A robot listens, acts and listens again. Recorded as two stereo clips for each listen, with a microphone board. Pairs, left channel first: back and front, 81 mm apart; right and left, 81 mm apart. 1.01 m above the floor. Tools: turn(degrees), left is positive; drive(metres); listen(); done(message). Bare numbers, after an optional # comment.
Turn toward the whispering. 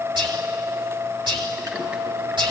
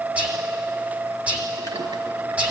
# The whispering: 15° left.
turn(15)
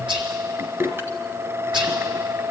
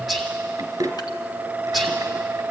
done("Found it: whispering, straight ahead.")